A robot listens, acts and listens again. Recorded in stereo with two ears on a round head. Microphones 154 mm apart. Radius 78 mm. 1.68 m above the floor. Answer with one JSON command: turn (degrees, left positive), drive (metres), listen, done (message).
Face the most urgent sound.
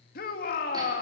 {"turn": 50}
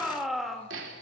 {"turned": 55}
{"done": "Found it: a shout, straight ahead."}